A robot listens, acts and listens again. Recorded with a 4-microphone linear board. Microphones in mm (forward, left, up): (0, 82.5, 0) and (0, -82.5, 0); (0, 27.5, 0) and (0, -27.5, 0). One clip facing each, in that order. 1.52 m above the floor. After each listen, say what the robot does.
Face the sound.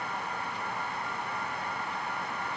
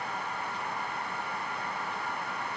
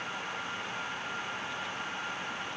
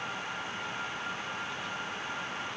Keep listening.
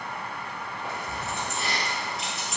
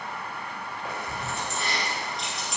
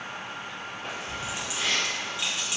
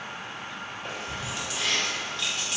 Turn 30° left.
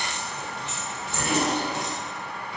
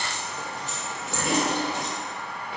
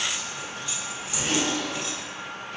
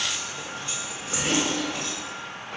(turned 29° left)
Turn 55° right.
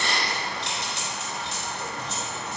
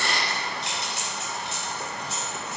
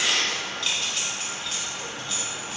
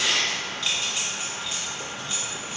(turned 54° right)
Turn 10° right.
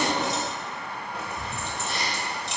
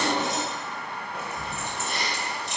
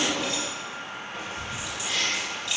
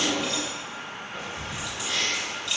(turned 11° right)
Facing the keys jangling.